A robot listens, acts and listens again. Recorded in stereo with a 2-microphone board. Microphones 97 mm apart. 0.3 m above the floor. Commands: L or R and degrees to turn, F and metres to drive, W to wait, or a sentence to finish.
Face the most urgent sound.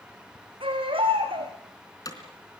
R65
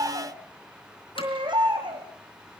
R50
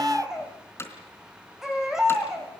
Found it: a baby crying, straight ahead, over 4 m away.